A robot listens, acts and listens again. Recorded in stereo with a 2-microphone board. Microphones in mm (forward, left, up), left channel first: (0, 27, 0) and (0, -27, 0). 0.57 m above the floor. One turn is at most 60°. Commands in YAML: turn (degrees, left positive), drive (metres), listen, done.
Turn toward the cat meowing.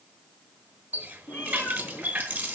turn: 30
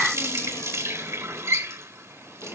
listen: true
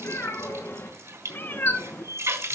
turn: 35
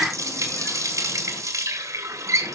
listen: true
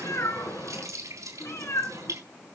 turn: 60
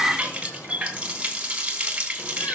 turn: 55
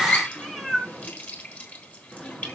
done: "Facing the cat meowing."